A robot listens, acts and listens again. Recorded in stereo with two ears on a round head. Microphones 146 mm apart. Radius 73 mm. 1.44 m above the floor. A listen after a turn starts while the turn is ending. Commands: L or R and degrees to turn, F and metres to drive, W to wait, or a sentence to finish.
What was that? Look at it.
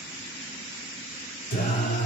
L55
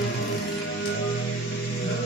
L70
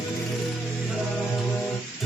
Found it: singing, straight ahead.